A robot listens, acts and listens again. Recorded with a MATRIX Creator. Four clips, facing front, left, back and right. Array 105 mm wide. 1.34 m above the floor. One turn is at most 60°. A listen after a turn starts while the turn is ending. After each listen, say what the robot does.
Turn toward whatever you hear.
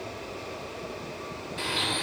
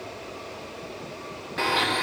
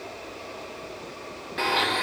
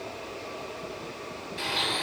Turn 60° left.
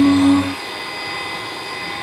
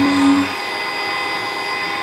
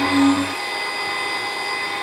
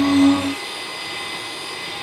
Turn 60° left.
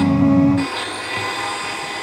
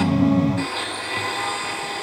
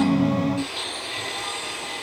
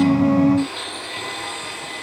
Turn 20° left.
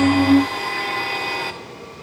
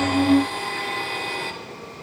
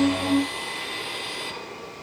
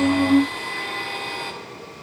Facing the blender, 1 to 2 m away.